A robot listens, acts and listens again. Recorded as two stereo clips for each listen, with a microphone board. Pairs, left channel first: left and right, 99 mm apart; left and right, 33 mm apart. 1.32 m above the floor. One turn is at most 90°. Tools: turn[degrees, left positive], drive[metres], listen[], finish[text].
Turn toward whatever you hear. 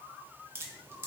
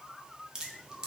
Thought: The dripping: about 25° right or 155° right.
Action: turn[-25]
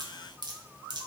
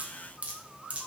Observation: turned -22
Thought: So it is at 135° right.
Action: turn[-90]
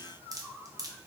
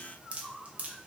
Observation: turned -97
Thought: The dripping is now 40° right.
Action: turn[-40]
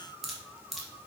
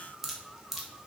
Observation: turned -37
Action: finish[Found it: dripping, straight ahead.]